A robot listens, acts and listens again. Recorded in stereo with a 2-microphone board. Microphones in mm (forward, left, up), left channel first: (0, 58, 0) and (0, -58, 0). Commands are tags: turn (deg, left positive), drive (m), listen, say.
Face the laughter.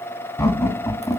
<turn deg="35"/>
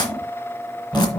<turn deg="10"/>
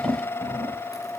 <turn deg="10"/>
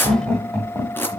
<turn deg="10"/>
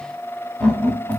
<turn deg="10"/>
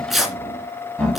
<say>Found it: laughter, straight ahead, over 4 m away.</say>